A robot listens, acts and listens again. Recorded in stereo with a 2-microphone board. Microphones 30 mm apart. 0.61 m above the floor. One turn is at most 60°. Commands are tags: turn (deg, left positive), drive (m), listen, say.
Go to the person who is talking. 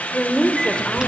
<turn deg="35"/>
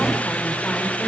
<listen/>
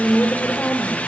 <turn deg="60"/>
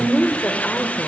<turn deg="55"/>
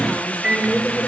<drive m="1.0"/>
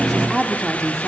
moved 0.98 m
<turn deg="10"/>
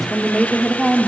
<drive m="1.0"/>
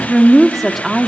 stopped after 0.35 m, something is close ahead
<say>Arrived at the woman speaking, straight ahead.</say>